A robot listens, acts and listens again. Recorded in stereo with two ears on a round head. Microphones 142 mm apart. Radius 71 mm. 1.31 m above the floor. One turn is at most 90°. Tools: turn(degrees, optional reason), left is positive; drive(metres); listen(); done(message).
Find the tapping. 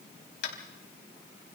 turn(degrees=75, reason="The tapping: about 75° left or 105° left.")
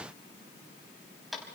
done("Found it: tapping, straight ahead, over 4 m away.")